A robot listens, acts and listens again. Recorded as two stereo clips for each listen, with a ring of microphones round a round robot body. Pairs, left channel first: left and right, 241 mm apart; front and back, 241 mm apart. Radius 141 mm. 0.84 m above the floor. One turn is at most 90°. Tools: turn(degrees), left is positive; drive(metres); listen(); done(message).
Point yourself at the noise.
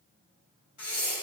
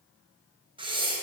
turn(degrees=90)
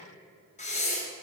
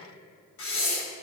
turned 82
turn(degrees=30)
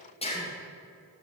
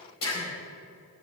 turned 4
turn(degrees=25)
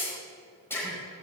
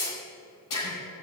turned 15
turn(degrees=10)
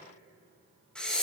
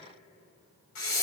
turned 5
done("Facing the breathing, over 4 m away.")